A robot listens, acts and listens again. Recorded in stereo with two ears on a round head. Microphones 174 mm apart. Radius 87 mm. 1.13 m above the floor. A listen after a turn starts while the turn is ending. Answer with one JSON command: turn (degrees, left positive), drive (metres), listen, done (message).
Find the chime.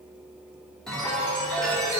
{"turn": 30}
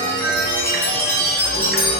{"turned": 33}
{"turn": 145}
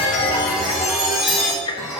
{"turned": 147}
{"done": "Facing the chime, 2 to 4 m away."}